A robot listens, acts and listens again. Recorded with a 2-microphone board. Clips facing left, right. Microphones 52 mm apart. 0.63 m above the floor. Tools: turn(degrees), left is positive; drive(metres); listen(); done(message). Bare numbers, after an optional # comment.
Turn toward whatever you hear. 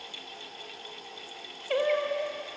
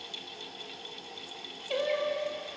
# The singing: about 25° left or 155° left.
turn(25)
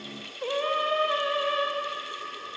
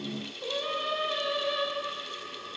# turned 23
# The singing: about 30° left or 150° left.
turn(30)
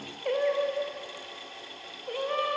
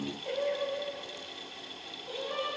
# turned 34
# So it is at 130° left.
turn(130)
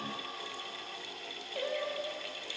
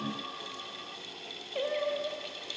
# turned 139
# The singing is now 10° right.
turn(-10)
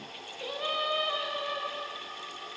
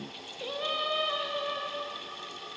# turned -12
done("Facing the singing.")